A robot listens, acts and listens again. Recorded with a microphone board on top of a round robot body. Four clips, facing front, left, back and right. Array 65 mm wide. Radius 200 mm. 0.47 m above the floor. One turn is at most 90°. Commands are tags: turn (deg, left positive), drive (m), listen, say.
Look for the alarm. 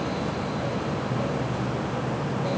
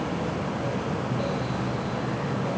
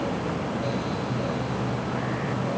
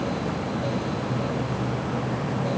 <listen/>
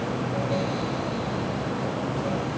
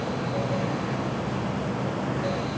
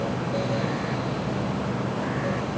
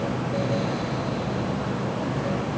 <listen/>
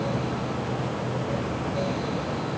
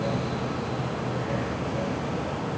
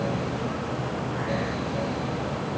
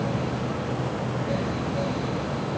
<say>I can't make out an alarm.</say>